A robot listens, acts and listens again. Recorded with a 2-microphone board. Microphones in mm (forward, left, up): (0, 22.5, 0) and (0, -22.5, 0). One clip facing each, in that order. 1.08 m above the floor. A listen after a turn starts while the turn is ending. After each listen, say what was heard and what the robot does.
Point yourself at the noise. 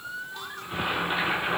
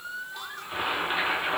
Turn 30° right.
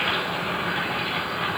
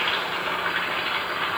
So it is at 140° right. Turn 140° right.
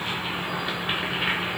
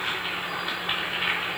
The boiling is now 10° left. Turn 10° left.
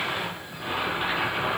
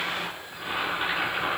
Facing the boiling, over 4 m away.